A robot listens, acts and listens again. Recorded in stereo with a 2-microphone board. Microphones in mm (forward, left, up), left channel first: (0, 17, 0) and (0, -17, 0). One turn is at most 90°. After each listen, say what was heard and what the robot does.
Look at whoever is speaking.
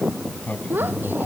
Turn 90° right.
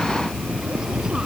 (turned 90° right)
Keep listening.
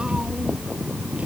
Keep listening.
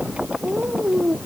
The child speaking is now 20° right. Turn 20° right.
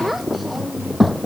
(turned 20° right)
Facing the child speaking.